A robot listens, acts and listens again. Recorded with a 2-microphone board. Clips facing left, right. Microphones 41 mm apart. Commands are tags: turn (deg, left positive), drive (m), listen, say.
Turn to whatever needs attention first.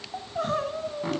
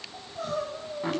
<turn deg="45"/>
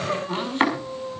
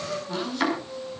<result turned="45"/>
<turn deg="90"/>
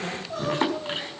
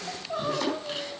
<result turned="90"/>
<turn deg="-15"/>
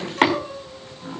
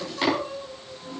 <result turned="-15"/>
<say>Facing the crying, 2 to 4 m away.</say>